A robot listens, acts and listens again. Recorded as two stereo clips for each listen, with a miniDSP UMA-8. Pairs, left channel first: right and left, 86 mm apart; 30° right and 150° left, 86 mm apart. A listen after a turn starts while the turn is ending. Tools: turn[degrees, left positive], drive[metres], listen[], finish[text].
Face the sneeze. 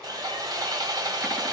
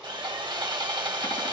Action: listen[]
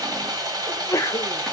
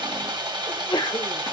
Thought: The sneeze: 40° right.
Action: turn[-40]
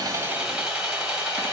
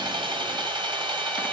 Action: finish[I heard a sneeze from this way, but can't make it out now.]